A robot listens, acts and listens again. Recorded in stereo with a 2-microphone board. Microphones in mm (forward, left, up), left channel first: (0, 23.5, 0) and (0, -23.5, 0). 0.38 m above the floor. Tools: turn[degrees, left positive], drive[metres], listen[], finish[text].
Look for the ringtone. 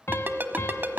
Thought: The ringtone: about 45° right or 135° right.
Action: turn[-45]
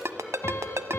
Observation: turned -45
Thought: So it is at 90° right.
Action: turn[-90]
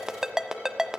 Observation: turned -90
Thought: The ringtone is now 10° right.
Action: turn[-10]
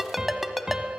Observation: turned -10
Action: finish[Found it: a ringtone, straight ahead, 1 to 2 m away.]